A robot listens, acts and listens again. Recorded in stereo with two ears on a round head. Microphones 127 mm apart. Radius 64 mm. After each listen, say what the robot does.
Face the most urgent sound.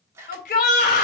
Turn 60° left.
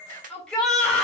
Facing the shout, 2 to 4 m away.